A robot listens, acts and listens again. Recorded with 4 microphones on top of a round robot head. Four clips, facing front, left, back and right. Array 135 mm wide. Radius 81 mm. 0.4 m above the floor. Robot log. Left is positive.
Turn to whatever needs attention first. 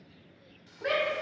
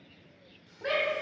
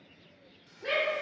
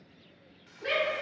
note: The shout: 35° left.
cmd yaw +35
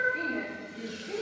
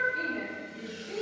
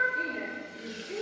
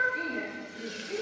note: The shout is now 20° left.
cmd yaw +20
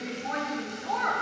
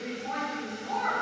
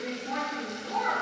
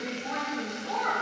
end: Found it: a shout, straight ahead, 2 to 4 m away.